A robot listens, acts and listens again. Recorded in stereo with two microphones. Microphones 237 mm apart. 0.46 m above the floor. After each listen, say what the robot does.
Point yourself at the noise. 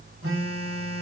Turn 65° right.
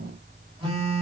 Turn 25° right.
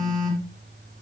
Facing the phone buzzing.